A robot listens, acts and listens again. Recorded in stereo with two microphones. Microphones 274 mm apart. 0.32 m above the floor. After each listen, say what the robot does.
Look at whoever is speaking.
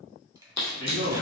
Turn 60° right.
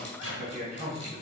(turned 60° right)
Turn 35° right.
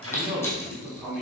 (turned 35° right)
Found it: a man speaking, straight ahead.